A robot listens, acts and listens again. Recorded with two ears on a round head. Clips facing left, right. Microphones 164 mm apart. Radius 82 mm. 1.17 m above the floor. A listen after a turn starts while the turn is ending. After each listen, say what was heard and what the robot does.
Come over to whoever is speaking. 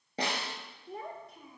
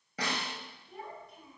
The child speaking: about 60° left or 120° left. Turn 60° left.
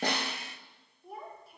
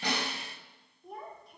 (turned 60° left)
Drive 1.0 m forward.
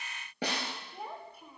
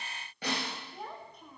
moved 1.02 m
The child speaking is now 10° left. Turn 10° left.
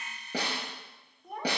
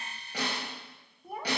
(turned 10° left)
Drive 1.0 m forward.
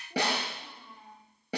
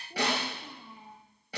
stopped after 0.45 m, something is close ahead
Arrived at the child speaking, straight ahead.